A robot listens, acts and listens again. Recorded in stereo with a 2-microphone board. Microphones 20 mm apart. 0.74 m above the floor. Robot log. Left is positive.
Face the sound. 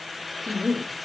note: The woman speaking: about 50° left or 130° left.
cmd yaw +50
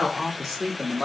note: So it is at 10° right.
cmd yaw -10
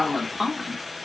note: The woman speaking is now 10° right.
cmd yaw -10
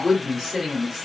note: The woman speaking is now 10° right.
cmd yaw -10
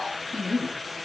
end: Found it: a woman speaking, straight ahead, 2 to 4 m away.